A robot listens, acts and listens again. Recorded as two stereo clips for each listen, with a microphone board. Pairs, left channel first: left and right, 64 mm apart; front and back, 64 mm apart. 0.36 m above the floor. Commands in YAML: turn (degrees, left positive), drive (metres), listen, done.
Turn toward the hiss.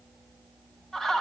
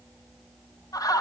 listen: true
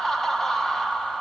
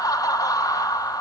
listen: true
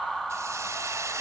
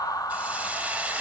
turn: -115
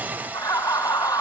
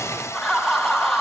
turn: -30
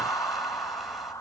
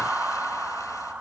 listen: true
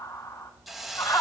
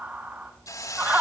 done: "Found it: a hiss, straight ahead, 1 to 2 m away."